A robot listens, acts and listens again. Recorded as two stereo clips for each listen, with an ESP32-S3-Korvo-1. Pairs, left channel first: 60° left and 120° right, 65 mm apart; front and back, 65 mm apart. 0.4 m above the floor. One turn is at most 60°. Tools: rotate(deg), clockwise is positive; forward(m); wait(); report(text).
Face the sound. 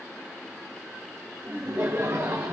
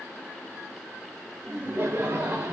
rotate(60)
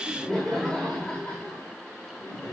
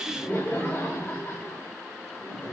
rotate(-20)
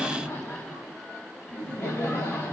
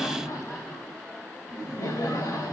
rotate(-10)
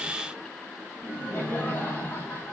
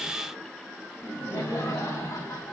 report("Facing the laughter.")